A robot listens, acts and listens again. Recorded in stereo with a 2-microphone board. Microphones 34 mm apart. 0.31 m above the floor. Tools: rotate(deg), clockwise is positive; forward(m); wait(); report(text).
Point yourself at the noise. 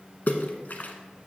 rotate(-50)
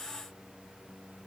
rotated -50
wait()
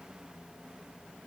report("I heard a splash, but can't make it out now. It was about straight ahead or 80° left.")